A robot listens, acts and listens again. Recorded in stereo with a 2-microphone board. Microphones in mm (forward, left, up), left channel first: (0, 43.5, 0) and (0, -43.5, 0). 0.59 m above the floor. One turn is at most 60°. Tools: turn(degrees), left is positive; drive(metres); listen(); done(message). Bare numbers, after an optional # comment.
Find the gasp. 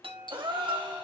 # The gasp: about 60° right or 120° right.
turn(-60)
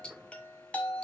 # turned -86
listen()
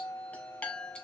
done("I heard a gasp, but can't make it out now. It was about 30° left or 35° right.")